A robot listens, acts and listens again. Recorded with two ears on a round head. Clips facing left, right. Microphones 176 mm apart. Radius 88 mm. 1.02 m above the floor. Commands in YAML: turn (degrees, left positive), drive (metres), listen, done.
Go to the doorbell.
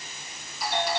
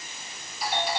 turn: 60
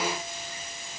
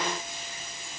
listen: true
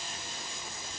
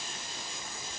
listen: true
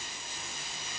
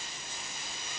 done: "I heard a doorbell, but can't make it out now. It was about straight ahead or 60° left. I did not reach it."